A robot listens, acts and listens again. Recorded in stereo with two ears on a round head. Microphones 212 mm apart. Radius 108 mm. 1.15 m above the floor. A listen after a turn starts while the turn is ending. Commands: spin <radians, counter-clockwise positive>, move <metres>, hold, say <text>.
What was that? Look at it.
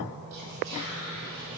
spin -1.57
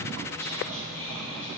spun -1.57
spin 0.26
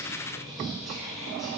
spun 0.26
say Found it: whispering, straight ahead, 1 to 2 m away.